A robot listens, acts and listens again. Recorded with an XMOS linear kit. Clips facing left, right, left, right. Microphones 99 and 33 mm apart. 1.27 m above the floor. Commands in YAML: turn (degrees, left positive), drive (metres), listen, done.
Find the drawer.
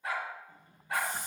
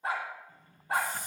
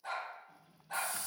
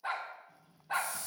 turn: 20
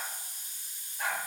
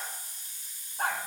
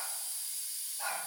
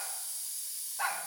listen: true
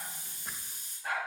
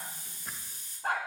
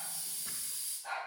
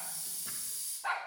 listen: true
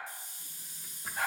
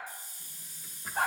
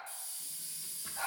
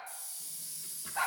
done: "I heard a drawer, but can't make it out now. It was about straight ahead or 140° left."